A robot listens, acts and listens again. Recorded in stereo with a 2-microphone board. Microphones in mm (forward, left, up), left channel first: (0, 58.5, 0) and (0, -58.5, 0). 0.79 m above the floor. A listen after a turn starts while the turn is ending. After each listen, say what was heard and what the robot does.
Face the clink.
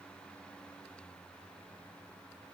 Keep listening.
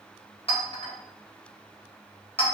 The clink: about 55° left or 125° left. Turn 55° left.
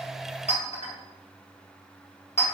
So it is at 70° left. Turn 70° left.
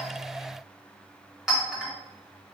Found it: a clink, straight ahead.